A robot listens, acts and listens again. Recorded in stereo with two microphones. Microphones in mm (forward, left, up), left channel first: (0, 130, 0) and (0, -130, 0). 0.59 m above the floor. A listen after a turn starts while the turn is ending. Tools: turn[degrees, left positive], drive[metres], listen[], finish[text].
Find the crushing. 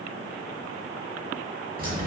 Action: listen[]
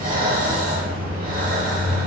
Action: listen[]
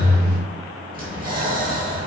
Action: finish[I can't make out crushing, only breathing.]